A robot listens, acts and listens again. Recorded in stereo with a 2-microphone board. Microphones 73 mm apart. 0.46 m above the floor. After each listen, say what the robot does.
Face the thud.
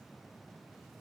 Keep listening.
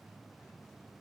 Keep listening.
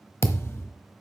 Turn 35° left.
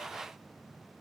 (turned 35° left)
Keep listening.
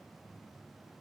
I heard a thud, but can't make it out now. It was about straight ahead or 110° left.